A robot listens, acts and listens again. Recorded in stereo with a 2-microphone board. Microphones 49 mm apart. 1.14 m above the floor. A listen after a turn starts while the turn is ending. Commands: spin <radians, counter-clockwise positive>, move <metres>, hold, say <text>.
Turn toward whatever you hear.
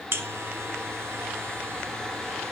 spin -0.87
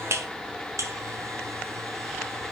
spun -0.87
spin -1.40
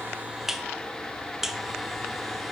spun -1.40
say Facing the buzzer.